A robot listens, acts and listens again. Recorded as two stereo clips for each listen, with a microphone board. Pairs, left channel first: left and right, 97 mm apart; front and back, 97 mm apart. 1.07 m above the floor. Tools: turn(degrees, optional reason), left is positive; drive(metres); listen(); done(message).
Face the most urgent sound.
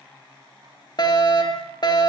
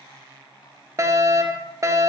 turn(degrees=125, reason="The fire alarm: 125° left.")
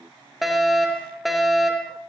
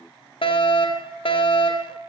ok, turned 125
done("Facing the fire alarm.")